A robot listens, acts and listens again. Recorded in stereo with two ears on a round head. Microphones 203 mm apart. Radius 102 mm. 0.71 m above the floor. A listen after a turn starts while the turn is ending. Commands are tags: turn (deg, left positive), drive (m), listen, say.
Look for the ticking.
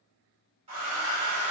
<listen/>
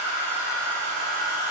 <listen/>
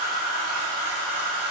<say>I can't make out ticking to turn to.</say>